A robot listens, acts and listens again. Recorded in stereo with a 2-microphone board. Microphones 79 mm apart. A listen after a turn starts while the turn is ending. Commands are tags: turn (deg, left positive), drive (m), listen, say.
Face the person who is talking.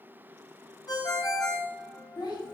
<turn deg="70"/>
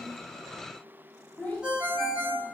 <turn deg="20"/>
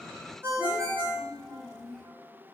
<say>Found it: a child speaking, straight ahead, 2 to 4 m away.</say>